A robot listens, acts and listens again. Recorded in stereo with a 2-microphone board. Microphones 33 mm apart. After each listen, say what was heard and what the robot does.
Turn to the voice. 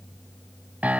Keep listening.
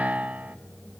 Keep listening.
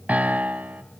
I can't make out anyone speaking, only a piano.